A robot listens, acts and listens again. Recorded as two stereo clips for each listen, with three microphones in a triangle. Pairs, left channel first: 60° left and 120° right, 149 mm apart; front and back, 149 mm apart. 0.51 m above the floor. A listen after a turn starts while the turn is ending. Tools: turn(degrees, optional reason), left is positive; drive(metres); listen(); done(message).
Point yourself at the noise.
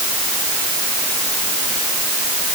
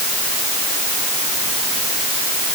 listen()
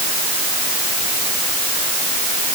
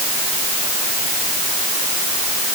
listen()
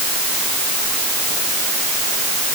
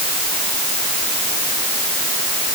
done("I can't make out anything.")